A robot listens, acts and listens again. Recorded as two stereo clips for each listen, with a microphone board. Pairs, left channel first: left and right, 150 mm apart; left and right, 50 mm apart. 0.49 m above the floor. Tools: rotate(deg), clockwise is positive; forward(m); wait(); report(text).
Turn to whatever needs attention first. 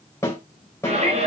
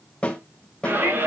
rotate(55)
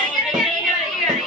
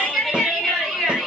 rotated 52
report("Found it: a shout, straight ahead.")